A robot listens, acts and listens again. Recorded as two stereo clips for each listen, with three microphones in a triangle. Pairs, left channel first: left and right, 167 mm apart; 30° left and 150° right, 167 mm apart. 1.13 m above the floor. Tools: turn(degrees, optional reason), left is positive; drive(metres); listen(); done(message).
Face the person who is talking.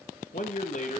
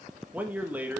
turn(degrees=130, reason="The man speaking: 130° left.")
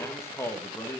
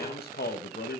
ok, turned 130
turn(degrees=15, reason="The man speaking is now 15° left.")
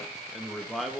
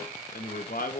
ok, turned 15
done("Facing the man speaking.")